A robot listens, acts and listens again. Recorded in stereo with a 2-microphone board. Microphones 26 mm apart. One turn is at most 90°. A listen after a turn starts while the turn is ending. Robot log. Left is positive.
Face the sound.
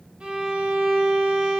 note: The violin: about 50° right or 130° right.
cmd yaw -50
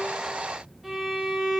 note: So it is at 15° right.
cmd yaw -15
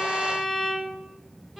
end: Found it: a violin, straight ahead.